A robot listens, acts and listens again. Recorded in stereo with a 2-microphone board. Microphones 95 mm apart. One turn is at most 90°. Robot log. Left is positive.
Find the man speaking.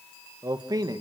note: The man speaking: about 45° right or 135° right.
cmd yaw -45
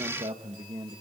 note: So it is at 65° right.
cmd yaw -65
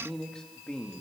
note: The man speaking is now 10° left.
cmd yaw +10
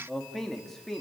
end: Found it: a man speaking, straight ahead, 2 to 4 m away.